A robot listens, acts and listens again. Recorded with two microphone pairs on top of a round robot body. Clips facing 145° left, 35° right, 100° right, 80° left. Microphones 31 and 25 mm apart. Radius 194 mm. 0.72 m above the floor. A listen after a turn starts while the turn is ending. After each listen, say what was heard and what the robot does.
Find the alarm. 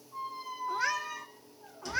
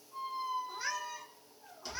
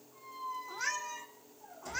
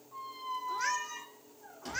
Keep listening.
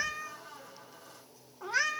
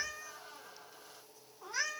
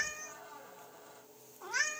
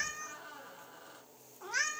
Keep listening.
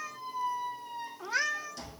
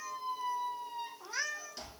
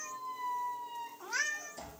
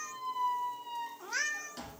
I can't make out an alarm to turn to.